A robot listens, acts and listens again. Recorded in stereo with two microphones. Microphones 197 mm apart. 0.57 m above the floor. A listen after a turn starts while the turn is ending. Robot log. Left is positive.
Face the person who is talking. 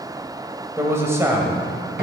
cmd yaw -30
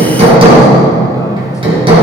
cmd idle
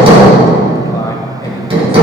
cmd idle
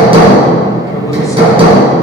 end: I heard a man speaking, but can't make it out now. It was about 15° left or 135° right.